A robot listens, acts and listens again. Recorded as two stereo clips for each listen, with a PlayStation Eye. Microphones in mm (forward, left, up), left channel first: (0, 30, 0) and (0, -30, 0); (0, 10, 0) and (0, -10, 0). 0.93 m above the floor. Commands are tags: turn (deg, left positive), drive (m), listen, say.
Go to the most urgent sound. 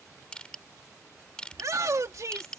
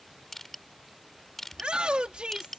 <turn deg="-65"/>
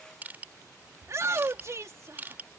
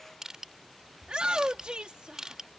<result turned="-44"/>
<turn deg="-60"/>
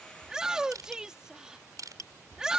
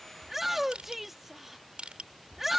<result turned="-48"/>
<turn deg="-10"/>
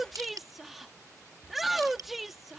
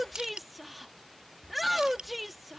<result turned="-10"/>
<drive m="1.0"/>
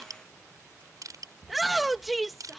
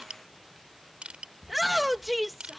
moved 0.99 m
<drive m="1.0"/>
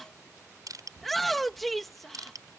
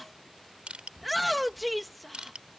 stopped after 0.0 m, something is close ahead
<say>I am next to the shout.</say>